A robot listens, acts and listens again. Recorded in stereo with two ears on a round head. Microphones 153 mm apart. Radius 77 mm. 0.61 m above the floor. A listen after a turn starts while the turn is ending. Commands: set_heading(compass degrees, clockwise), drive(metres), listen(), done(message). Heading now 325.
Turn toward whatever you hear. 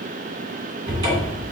set_heading(350)
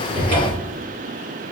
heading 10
set_heading(120)
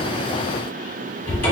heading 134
set_heading(119)
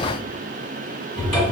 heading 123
done("Found it: a cupboard door, straight ahead, 1 to 2 m away.")